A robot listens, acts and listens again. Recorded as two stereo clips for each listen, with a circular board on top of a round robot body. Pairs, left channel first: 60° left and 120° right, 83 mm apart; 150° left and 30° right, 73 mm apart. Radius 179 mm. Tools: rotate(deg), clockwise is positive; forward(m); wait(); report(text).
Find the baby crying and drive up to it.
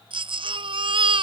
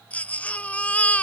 rotate(135)
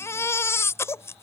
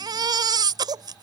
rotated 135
forward(1.0)
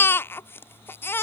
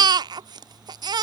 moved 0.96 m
forward(1.0)
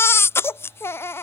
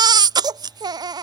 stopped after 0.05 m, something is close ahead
report("Arrived at the baby crying, straight ahead.")